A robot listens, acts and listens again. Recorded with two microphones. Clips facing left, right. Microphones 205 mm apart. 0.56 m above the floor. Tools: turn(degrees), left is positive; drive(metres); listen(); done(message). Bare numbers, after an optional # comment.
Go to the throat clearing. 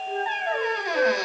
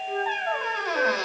listen()
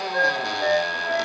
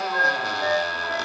listen()
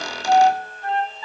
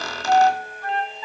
done("I can't make out throat clearing, only a flute and a squeak.")